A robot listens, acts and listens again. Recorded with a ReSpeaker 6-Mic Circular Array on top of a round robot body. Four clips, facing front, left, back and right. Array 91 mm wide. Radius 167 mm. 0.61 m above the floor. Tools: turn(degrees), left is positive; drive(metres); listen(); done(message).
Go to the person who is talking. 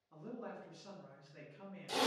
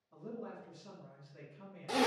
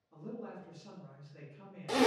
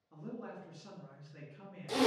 turn(degrees=-60)
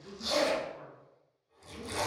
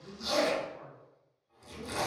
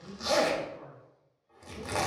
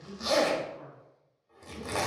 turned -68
turn(degrees=10)
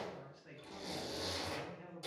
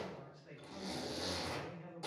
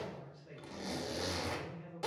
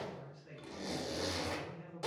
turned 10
drive(metres=1.0)
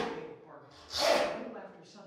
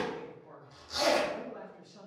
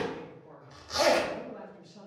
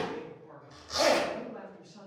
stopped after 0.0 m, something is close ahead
done("Something is in my way. I am facing the man speaking but have not reached it.")